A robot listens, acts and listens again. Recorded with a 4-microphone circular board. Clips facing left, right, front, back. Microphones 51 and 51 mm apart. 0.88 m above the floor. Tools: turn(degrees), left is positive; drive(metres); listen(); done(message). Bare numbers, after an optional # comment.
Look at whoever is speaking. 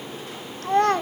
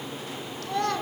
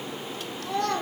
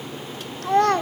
# The child speaking: 140° left.
turn(140)
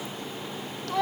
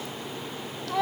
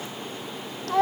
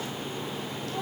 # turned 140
done("Facing the child speaking, 1 to 2 m away.")